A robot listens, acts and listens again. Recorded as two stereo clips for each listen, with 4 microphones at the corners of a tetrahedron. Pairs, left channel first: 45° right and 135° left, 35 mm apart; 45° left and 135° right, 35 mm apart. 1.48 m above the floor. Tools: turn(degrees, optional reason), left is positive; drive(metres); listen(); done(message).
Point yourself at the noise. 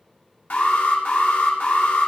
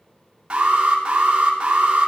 turn(degrees=-75, reason="The alarm: 75° right.")
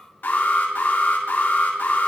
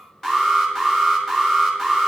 turn(degrees=-35, reason="The alarm is now 35° right.")
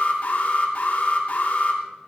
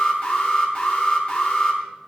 done("Facing the alarm.")